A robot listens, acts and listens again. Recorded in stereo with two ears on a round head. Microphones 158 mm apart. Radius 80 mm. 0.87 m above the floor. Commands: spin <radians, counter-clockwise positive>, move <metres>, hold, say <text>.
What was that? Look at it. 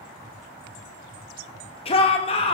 spin 0.52
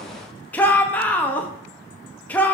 spin 0.17
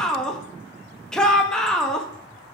say Found it: a shout, straight ahead, under 1 m away.